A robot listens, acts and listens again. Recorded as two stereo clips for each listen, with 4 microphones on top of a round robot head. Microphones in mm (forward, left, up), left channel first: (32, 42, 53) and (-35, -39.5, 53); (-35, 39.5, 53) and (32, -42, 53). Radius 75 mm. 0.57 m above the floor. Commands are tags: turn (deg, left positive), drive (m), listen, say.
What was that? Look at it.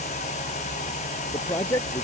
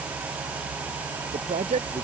<turn deg="-15"/>
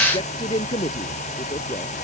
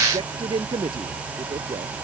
<say>Found it: a man speaking, straight ahead.</say>